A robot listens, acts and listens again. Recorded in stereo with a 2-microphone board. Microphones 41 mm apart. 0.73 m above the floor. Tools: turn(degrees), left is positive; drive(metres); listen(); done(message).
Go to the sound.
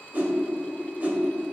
turn(degrees=-45)
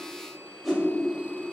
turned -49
drive(metres=1.0)
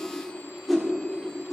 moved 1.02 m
drive(metres=1.0)
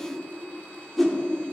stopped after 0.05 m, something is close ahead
done("I am next to the whoosh.")